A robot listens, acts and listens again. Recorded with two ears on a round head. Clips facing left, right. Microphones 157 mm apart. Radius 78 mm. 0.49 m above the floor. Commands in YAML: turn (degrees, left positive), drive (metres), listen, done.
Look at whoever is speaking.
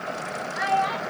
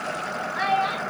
turn: -50
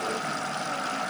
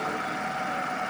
listen: true
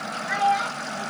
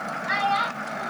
turn: -75
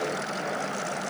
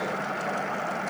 listen: true
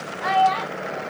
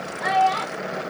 done: "Found it: a child speaking, straight ahead."